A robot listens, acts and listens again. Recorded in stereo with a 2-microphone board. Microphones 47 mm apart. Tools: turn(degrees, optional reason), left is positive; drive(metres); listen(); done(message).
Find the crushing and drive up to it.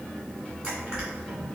turn(degrees=-20, reason="The crushing: about 20° right or 160° right.")
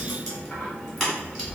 drive(metres=1.0)
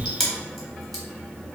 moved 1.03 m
drive(metres=1.0)
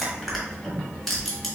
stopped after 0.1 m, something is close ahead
done("I am next to the crushing.")